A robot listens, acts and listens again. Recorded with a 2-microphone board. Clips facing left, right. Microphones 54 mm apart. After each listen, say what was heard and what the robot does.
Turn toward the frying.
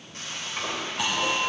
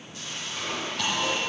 The frying: about 50° left or 130° left. Turn 50° left.
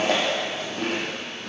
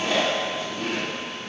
Keep listening.
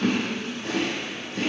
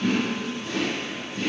Keep listening.
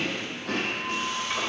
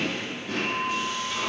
So it is at 75° left. Turn 75° left.
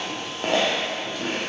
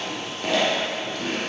Keep listening.
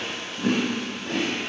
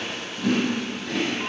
Keep listening.
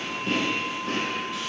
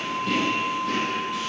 I heard frying from this way, but can't make it out now.